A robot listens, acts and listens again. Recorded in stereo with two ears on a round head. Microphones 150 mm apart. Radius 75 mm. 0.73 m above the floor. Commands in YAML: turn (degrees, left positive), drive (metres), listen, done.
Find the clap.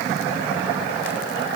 listen: true
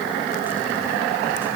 listen: true
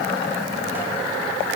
done: "I can't make out a clap."